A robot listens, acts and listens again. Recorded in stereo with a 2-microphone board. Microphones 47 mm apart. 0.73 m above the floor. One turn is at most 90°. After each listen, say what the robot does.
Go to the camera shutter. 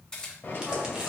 Turn 15° left.
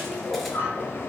Keep listening.
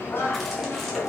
Keep listening.
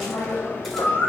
I heard a camera shutter, but can't make it out now. It was about straight ahead or 150° left. I did not reach it.